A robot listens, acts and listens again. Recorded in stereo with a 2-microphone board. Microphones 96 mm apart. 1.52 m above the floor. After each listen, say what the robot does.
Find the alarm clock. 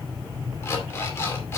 Turn 25° left.
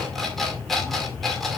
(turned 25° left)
Found it: an alarm clock, straight ahead, 2 to 4 m away.